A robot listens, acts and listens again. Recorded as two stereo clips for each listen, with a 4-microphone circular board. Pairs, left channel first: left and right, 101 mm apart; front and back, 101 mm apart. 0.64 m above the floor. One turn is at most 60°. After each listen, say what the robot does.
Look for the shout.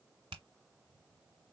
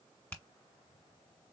Keep listening.
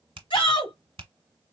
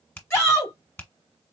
Turn 60° left.
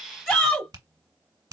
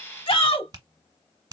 Facing the shout.